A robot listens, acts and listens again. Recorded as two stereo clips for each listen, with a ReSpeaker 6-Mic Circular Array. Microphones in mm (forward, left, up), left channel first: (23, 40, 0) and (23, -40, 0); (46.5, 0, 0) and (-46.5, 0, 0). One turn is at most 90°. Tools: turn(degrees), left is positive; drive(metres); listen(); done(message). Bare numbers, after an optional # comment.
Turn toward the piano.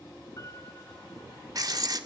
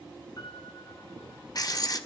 # The piano: 45° left.
turn(45)
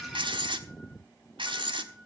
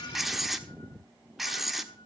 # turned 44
listen()
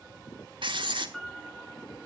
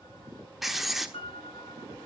done("Found it: a piano, straight ahead.")